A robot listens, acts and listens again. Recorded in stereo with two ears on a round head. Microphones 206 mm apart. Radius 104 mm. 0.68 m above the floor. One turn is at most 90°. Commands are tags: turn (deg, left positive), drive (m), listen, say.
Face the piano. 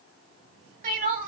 <listen/>
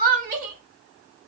<listen/>
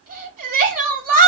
<say>I can't make out a piano to turn to.</say>